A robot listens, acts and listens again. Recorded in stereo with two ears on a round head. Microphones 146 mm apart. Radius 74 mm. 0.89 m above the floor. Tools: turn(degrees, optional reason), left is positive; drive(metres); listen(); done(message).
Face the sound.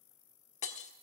turn(degrees=45, reason="The breaking glass: about 45° left or 135° left.")
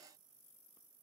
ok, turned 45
listen()
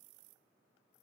done("I heard breaking glass, but can't make it out now. It was about straight ahead or 90° left.")